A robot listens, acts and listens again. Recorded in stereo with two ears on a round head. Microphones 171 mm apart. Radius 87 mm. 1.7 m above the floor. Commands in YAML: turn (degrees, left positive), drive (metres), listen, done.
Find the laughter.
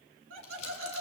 turn: -90
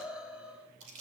done: "Facing the laughter."